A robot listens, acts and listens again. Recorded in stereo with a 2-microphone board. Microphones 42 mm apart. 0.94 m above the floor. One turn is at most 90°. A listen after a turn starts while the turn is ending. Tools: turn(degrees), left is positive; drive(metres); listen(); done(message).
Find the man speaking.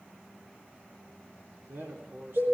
turn(degrees=-75)
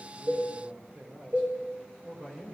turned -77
turn(degrees=-30)
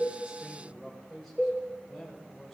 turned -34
done("Facing the man speaking.")